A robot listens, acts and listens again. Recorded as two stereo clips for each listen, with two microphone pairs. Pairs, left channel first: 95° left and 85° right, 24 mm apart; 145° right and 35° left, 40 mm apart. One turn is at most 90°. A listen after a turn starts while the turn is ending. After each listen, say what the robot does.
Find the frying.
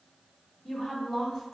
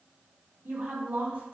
Keep listening.
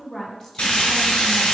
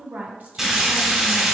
Turn 90° left.
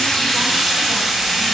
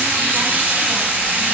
Facing the frying, 1 to 2 m away.